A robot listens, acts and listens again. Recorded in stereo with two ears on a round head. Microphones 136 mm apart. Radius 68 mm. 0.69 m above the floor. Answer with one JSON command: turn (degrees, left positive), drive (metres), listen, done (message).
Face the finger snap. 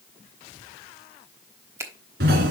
{"turn": -20}
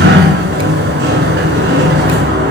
{"listen": true}
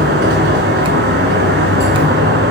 {"listen": true}
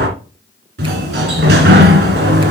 {"done": "I heard a finger snap, but can't make it out now. It was about straight ahead or 140° right."}